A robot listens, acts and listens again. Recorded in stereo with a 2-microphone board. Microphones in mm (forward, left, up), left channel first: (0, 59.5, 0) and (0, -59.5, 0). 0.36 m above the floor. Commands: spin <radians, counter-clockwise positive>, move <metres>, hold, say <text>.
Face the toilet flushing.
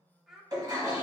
spin -0.61
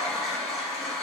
say Found it: a toilet flushing, straight ahead.